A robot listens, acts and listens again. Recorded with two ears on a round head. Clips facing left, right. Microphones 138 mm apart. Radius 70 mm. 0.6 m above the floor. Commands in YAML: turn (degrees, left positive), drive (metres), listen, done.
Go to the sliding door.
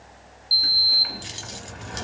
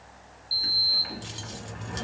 turn: 60
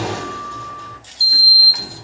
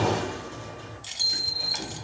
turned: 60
turn: 60
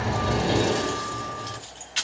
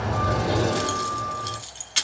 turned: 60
turn: 25
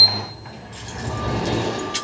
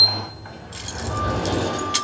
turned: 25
turn: 15
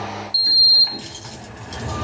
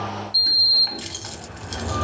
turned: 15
drive: 1.0
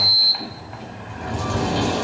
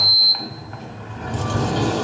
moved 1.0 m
drive: 1.0
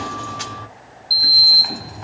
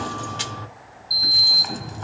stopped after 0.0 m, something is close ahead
done: "I am next to the sliding door."